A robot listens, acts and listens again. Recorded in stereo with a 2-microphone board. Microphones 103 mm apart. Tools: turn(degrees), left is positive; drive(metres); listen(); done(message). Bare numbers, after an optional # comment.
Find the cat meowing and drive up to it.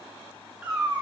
turn(-30)
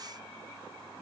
listen()
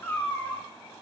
# So it is at 20° left.
turn(20)
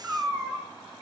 drive(1.0)
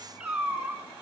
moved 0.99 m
# The cat meowing is now 10° right.
turn(-10)
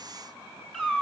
drive(1.0)
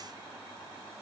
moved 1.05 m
listen()
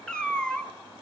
# The cat meowing is now 10° left.
turn(10)
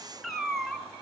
drive(1.0)
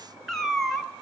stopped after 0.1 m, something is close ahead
done("I am next to the cat meowing.")